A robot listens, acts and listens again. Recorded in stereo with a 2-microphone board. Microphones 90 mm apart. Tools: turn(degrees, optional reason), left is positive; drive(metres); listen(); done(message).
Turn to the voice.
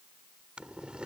listen()
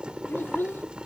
turn(degrees=25, reason="The child speaking: about 25° left or 155° left.")
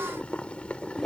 listen()
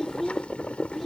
done("Found it: a child speaking, straight ahead.")